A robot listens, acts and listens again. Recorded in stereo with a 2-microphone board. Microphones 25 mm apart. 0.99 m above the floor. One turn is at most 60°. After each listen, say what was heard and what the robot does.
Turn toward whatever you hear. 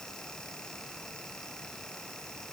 Keep listening.
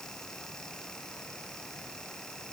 Keep listening.
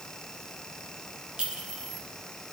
The clink: about 40° right or 140° right. Turn 40° right.
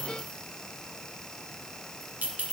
So it is at 95° right. Turn 60° right.
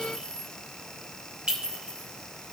The clink is now 40° right. Turn 40° right.
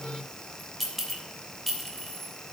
Facing the clink.